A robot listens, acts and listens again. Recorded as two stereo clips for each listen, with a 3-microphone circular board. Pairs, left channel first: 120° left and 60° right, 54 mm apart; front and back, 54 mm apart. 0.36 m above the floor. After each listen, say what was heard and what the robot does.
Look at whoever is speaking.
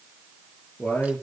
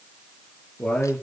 The man speaking: 65° left. Turn 65° left.
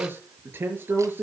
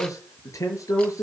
The man speaking is now 10° right. Turn 10° right.
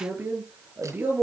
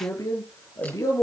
Facing the man speaking.